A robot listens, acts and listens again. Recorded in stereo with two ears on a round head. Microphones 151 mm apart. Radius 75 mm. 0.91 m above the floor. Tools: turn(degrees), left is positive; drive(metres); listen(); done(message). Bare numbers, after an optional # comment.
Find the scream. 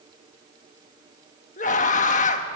# The scream: about 45° left or 135° left.
turn(45)
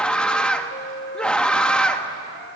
done("Facing the scream.")